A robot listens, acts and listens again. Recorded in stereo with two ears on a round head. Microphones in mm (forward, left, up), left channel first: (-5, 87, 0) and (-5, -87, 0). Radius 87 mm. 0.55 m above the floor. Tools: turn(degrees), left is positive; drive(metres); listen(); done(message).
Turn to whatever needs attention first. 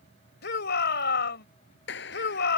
turn(degrees=60)
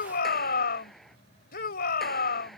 turn(degrees=55)
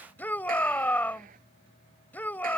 turn(degrees=10)
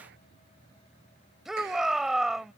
done("Facing the shout.")